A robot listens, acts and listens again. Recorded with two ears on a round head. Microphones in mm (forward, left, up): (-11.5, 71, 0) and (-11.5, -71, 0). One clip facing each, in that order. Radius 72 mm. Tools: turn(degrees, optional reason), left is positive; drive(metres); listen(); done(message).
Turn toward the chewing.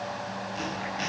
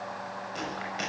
turn(degrees=-65, reason="The chewing: about 65° right or 115° right.")
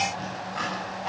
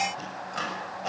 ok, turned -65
turn(degrees=-50, reason="So it is at 50° right.")
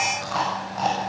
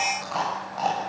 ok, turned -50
done("Found it: chewing, straight ahead.")